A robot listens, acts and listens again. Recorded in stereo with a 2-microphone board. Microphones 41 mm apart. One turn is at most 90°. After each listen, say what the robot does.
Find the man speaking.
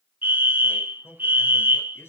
Turn 90° left.
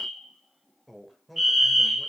Found it: a man speaking, straight ahead.